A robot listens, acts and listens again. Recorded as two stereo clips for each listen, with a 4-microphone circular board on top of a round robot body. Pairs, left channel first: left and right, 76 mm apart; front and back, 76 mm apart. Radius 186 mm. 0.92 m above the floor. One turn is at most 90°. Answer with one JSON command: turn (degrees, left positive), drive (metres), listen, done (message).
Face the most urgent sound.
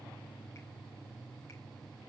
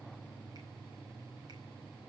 {"listen": true}
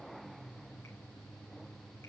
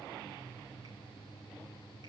{"listen": true}
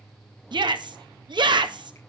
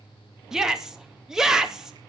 {"turn": -90}
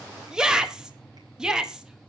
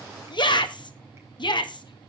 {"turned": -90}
{"turn": -10}
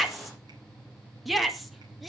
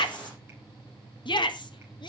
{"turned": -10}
{"done": "Found it: a shout, straight ahead, 2 to 4 m away."}